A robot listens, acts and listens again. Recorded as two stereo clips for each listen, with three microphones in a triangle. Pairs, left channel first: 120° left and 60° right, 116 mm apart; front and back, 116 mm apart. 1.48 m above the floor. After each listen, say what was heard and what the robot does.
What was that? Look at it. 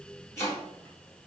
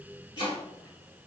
The chopping: 55° left. Turn 55° left.
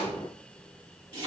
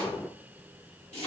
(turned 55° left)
The chopping is now 10° right. Turn 10° right.
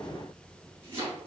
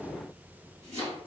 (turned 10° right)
Facing the chopping.